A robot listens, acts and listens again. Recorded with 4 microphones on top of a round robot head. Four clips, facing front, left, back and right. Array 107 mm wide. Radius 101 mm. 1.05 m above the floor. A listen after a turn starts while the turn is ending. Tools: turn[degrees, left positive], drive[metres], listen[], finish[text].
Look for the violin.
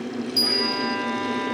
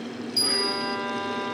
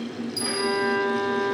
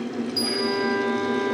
Thought: The violin: 145° left.
Action: turn[145]
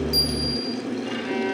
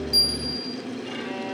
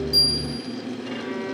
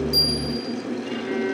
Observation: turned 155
Thought: Nothing new. It was at 10° right.
Action: turn[-10]
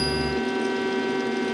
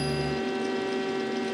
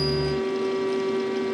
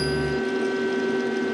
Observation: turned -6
Action: finish[Found it: a violin, straight ahead, 2 to 4 m away.]